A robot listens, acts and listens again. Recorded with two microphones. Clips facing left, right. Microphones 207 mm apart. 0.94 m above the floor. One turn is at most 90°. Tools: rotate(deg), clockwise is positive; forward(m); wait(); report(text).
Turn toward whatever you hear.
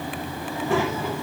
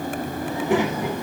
rotate(15)
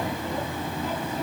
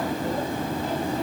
wait()
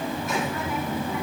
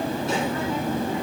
rotate(30)
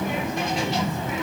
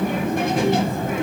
rotate(90)
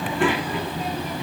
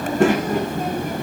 rotate(50)
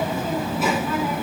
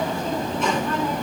report("Found it: a child speaking, straight ahead.")